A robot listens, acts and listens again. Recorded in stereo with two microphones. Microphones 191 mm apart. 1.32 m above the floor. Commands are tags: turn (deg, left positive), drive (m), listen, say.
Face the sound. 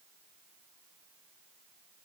<listen/>
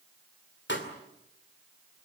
<turn deg="75"/>
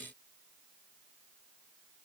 <listen/>
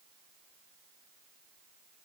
<say>I heard a pop, but can't make it out now. It was about straight ahead or 30° left.</say>